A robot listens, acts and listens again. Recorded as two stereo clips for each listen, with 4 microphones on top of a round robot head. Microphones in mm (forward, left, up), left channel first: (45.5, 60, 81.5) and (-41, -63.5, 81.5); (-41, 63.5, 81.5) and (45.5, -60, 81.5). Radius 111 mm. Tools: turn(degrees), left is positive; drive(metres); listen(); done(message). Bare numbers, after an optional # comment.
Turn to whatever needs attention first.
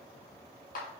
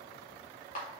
listen()
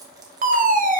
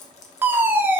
# The fire alarm: 130° right.
turn(-130)
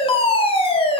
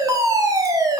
# The fire alarm is now 10° left.
turn(10)
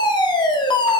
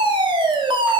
done("Found it: a fire alarm, straight ahead.")